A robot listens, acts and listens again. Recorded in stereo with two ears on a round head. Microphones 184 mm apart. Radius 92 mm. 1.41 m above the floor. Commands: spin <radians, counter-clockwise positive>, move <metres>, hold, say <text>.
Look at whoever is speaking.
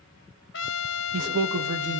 spin -1.13
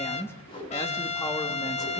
spin 0.26
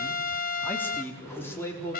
spin 0.26
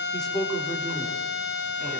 say Found it: a man speaking, straight ahead.